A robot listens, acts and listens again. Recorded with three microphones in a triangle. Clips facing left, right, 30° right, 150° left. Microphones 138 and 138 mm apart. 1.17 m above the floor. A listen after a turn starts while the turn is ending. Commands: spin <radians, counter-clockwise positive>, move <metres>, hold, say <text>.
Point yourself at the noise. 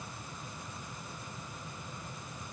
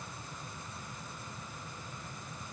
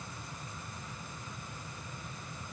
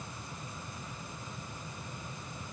hold
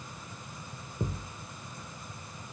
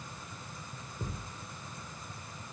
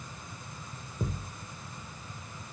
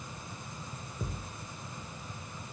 spin 0.70
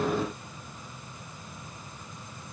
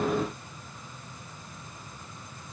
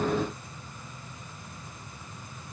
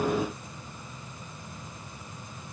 say Facing where the thud came from. I can't hear it now.